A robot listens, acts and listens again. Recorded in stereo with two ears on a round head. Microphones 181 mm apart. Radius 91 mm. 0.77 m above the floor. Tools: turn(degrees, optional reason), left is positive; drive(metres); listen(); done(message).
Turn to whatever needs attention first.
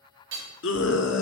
turn(degrees=70, reason="The scream: about 70° left or 110° left.")
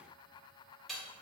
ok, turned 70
listen()
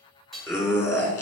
turn(degrees=10, reason="So it is at 10° left.")
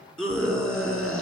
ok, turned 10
done("Found it: a scream, straight ahead.")